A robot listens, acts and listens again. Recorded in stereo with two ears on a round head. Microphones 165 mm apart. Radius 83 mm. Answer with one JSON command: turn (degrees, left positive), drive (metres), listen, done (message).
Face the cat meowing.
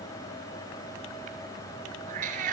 {"turn": -45}
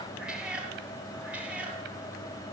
{"done": "Found it: a cat meowing, straight ahead, 2 to 4 m away."}